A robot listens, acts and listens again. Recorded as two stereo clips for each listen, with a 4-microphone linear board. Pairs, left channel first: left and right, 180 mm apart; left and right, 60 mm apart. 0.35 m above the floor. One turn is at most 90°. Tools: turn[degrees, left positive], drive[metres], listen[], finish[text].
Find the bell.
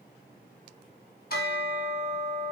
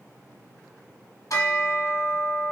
Thought: The bell: about 60° left or 120° left.
Action: turn[60]
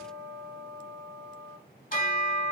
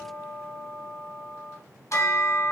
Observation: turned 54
Thought: So it is at 60° left.
Action: turn[60]
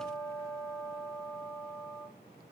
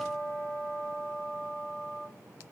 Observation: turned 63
Action: finish[Facing the bell, 1 to 2 m away.]